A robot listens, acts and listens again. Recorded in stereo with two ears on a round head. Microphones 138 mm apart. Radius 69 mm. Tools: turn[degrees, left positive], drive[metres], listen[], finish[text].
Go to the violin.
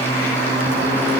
Action: listen[]
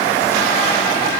Action: listen[]
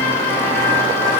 Action: finish[I can't make out a violin to turn to.]